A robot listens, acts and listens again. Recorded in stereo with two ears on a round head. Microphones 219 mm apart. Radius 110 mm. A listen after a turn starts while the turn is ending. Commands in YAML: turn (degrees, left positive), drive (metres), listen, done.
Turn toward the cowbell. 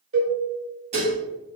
turn: -55
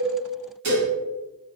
done: "Found it: a cowbell, straight ahead, 1 to 2 m away."